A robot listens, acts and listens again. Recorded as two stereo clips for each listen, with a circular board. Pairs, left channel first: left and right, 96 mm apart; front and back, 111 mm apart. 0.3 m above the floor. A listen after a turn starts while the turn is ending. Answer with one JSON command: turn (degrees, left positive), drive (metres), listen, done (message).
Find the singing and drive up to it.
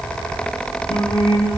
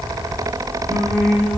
{"turn": 85}
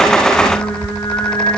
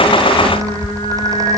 {"turn": 35}
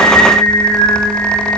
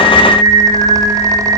{"turn": 20}
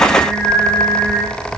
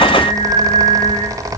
{"drive": 1.0}
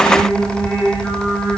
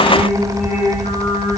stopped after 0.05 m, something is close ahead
{"turn": 15}
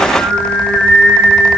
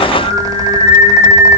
{"done": "Something is in my way. I am facing the singing but have not reached it."}